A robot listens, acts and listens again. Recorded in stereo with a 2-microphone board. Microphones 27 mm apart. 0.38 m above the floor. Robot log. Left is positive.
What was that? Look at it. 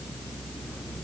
cmd idle
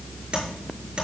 note: The tapping: about 40° right or 140° right.
cmd yaw -40
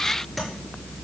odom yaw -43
end: Facing the tapping, over 4 m away.